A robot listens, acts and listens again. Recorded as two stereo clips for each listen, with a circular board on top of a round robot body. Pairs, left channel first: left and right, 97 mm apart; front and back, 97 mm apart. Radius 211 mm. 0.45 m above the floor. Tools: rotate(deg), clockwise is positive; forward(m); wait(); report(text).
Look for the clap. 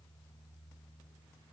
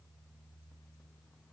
wait()
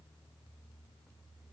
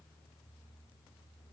wait()
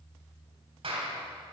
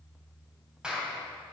rotate(100)
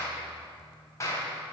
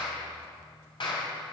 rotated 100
rotate(-30)
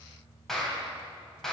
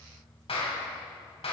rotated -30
report("Facing the clap, 2 to 4 m away.")